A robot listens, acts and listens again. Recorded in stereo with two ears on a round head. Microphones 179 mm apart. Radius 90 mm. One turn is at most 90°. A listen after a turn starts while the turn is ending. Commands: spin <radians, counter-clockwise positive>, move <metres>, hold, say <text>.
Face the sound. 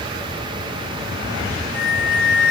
spin 0.52
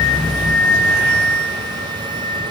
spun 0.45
spin -0.17
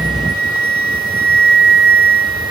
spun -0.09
say Found it: a flute, straight ahead.